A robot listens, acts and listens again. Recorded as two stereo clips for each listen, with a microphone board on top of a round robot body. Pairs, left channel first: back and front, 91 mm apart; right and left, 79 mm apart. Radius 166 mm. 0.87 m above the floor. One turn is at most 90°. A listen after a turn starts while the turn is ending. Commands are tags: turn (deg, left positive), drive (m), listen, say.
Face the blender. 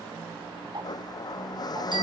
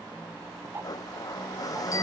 <turn deg="-90"/>
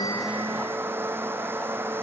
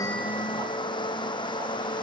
<turn deg="-65"/>
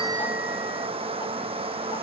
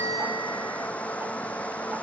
<turn deg="-15"/>
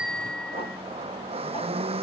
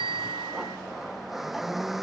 <say>Facing the blender.</say>